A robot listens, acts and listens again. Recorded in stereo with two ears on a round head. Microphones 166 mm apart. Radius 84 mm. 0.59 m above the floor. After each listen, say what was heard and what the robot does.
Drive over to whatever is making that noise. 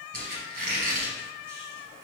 The squeak: about 50° right or 130° right. Turn 50° right.
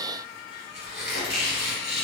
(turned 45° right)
Drive 1.0 m forward.
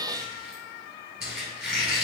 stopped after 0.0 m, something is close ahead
Something is in my way. I am facing the squeak but have not reached it.